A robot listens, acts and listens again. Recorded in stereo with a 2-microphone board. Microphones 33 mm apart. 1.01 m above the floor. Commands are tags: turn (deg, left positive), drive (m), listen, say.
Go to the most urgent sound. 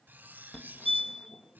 <turn deg="30"/>
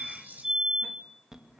<turn deg="-20"/>
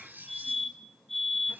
<drive m="1.0"/>
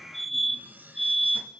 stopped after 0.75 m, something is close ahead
<say>I am next to the fire alarm.</say>